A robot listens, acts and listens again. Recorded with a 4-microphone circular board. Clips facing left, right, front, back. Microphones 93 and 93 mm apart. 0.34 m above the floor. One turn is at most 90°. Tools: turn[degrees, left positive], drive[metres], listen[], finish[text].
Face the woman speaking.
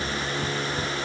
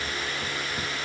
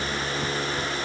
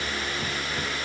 Action: listen[]
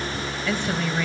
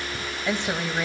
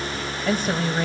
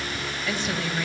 Thought: The woman speaking: 20° right.
Action: turn[-20]
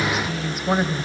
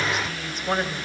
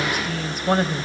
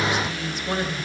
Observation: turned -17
Thought: The woman speaking is now 15° left.
Action: turn[15]
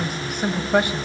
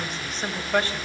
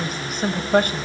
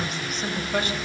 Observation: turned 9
Thought: The woman speaking is now 20° left.
Action: turn[20]
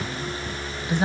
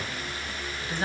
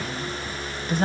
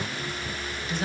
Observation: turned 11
Thought: The woman speaking is now 25° left.
Action: turn[25]
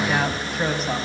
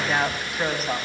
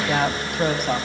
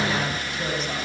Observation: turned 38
Action: finish[Found it: a woman speaking, straight ahead, 2 to 4 m away.]